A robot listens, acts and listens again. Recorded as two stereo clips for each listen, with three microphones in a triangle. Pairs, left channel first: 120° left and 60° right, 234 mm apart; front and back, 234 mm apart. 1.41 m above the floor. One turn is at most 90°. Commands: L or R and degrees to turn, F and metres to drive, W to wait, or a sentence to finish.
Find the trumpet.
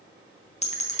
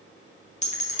W
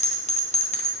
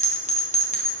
W
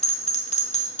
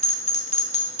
I can't make out a trumpet to turn to.